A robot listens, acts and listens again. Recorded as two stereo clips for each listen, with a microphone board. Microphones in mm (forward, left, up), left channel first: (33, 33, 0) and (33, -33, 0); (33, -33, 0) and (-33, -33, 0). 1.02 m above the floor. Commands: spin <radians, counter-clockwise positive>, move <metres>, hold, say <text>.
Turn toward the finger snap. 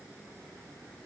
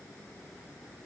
hold
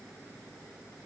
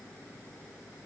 hold
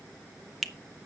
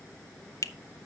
say Facing the finger snap, under 1 m away.